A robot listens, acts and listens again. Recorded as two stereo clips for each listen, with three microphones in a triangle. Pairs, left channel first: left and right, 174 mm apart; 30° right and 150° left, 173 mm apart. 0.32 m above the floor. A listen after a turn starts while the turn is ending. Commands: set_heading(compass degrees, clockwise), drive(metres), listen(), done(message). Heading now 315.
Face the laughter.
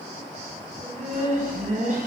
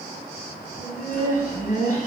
set_heading(15)
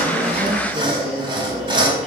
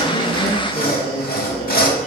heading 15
set_heading(5)
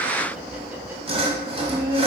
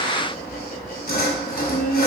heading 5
set_heading(25)
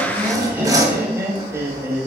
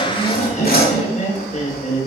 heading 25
set_heading(45)
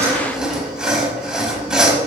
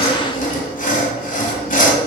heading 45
listen()
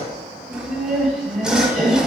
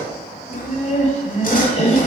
done("Facing the laughter.")